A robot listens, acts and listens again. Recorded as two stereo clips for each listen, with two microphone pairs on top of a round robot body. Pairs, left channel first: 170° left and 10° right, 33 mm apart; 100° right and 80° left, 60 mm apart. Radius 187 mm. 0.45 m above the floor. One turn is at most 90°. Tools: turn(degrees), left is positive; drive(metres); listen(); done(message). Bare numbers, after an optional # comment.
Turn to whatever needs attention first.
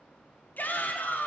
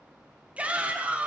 # The shout: 150° left.
turn(90)
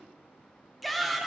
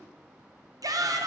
# The shout is now 80° left.
turn(80)
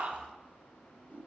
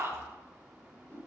# The shout is now 35° left.
turn(35)
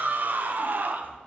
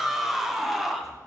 done("Found it: a shout, straight ahead, 1 to 2 m away.")